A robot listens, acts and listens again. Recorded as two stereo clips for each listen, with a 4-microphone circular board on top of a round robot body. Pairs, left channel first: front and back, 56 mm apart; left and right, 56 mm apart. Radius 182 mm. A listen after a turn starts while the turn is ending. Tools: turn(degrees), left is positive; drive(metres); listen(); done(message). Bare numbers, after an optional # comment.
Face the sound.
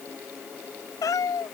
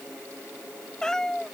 # The cat meowing: 10° left.
turn(10)
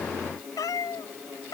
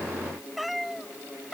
done("Found it: a cat meowing, straight ahead.")